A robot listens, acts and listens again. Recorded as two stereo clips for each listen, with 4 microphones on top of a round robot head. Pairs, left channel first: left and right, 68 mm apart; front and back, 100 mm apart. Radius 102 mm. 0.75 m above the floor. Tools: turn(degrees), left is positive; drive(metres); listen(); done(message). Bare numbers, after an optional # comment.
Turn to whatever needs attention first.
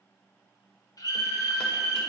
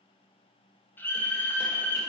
# The scream: 65° left.
turn(65)
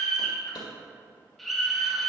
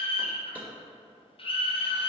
done("Facing the scream.")